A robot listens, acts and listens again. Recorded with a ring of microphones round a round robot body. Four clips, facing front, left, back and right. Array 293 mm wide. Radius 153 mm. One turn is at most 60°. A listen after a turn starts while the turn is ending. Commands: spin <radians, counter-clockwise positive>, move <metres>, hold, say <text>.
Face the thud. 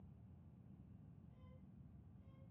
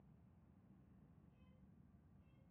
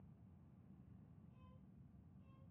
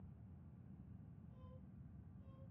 hold
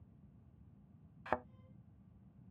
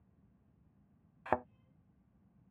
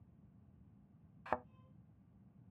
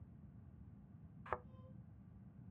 spin 1.05
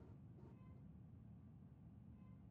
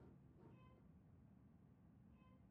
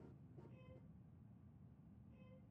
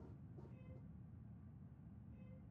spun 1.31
say Facing where the thud came from. I can't hear it now.